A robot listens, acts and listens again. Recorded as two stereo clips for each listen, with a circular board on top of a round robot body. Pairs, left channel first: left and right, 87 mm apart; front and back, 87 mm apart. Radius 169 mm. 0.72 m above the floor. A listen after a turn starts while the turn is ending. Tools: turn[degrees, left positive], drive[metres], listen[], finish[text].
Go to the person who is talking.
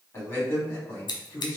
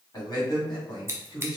Thought: The man speaking: 40° left.
Action: turn[40]
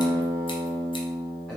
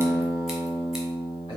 Action: listen[]
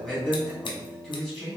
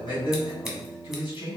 Thought: The man speaking is now 15° left.
Action: turn[15]
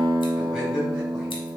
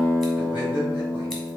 Action: listen[]
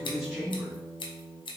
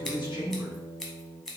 Action: drive[1.0]
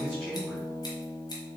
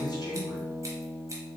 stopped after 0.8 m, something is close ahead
Action: listen[]
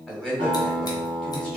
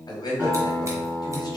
Action: finish[Arrived at the man speaking, straight ahead.]